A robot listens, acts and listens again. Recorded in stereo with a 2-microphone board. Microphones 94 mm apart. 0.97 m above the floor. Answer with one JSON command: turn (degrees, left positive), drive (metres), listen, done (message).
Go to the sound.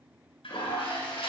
{"turn": 90}
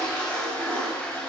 {"turn": 15}
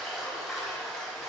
{"drive": 1.0}
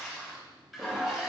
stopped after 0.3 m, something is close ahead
{"done": "Blocked. The toilet flushing is further on, straight ahead."}